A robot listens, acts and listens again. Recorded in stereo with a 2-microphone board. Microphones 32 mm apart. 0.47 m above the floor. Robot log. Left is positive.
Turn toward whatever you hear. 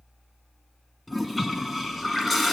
cmd yaw +30
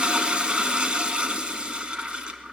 note: So it is at 35° right.
cmd yaw -35
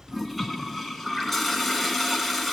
end: Facing the toilet flushing.